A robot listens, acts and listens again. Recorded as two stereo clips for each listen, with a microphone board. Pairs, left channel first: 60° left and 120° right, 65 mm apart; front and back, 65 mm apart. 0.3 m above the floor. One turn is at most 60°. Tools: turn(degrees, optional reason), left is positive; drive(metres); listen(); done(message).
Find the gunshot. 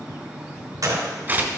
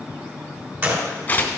turn(degrees=-60, reason="The gunshot: 125° right.")
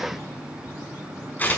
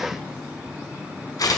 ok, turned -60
turn(degrees=-60, reason="Nothing new. It was at 65° right.")
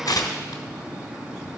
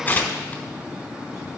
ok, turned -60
done("I heard a gunshot from this way, but can't make it out now.")